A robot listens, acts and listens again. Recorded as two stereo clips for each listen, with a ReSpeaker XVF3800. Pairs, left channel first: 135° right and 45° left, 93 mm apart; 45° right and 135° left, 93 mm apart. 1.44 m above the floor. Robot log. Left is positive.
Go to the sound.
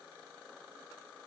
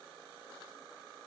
cmd idle
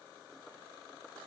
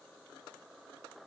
cmd idle
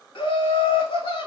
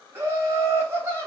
note: The laughter: 160° right.
cmd yaw -160
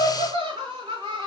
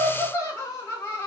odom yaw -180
note: The laughter is now 20° left.
cmd yaw +20
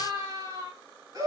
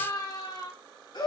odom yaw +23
cmd fwd 1.0
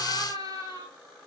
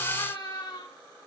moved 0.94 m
cmd fwd 1.0
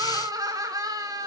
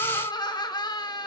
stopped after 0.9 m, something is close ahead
end: I am next to the laughter.